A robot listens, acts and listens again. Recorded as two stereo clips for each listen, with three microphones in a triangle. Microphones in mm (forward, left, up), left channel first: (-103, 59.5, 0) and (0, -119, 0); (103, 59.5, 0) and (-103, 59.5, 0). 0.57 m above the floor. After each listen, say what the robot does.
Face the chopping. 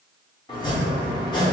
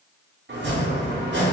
Turn 175° right.
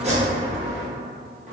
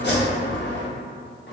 Turn 10° right.
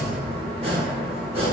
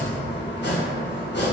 Found it: chopping, straight ahead.